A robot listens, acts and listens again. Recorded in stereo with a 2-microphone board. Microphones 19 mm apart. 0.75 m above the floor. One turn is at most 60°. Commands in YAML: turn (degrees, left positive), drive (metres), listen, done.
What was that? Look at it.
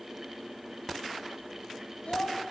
turn: 60
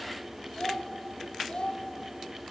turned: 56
turn: 60
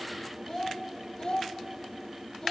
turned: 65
turn: 30
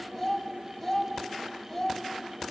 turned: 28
done: "Facing the child speaking."